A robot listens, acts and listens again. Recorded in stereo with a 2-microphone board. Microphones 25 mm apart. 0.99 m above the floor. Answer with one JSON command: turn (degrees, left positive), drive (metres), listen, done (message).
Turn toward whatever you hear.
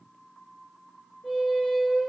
{"turn": 30}
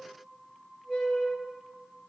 {"done": "Found it: a squeak, straight ahead, under 1 m away."}